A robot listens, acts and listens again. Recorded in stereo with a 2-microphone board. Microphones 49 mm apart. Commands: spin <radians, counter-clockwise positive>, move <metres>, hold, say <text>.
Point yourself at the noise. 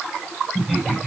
spin -0.52
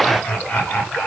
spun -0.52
spin 0.35
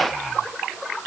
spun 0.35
hold
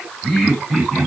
say Facing the laughter.